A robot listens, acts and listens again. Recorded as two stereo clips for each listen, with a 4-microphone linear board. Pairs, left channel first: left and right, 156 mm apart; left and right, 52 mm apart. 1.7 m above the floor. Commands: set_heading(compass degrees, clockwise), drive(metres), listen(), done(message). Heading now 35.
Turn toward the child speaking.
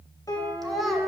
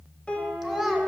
set_heading(5)
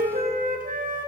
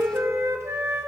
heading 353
listen()
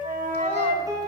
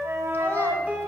listen()
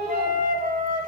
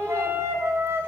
done("I heard a child speaking, but can't make it out now. It was about 40° right or 135° left.")